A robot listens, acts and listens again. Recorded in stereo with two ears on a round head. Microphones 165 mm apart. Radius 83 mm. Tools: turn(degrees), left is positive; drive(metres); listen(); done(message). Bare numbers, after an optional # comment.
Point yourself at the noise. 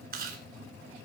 # The chewing: about 55° right or 125° right.
turn(-55)
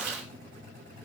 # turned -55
# So it is at 65° right.
turn(-65)
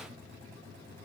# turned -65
listen()
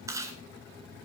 # The chewing is now 20° right.
turn(-20)
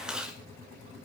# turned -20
done("Found it: chewing, straight ahead.")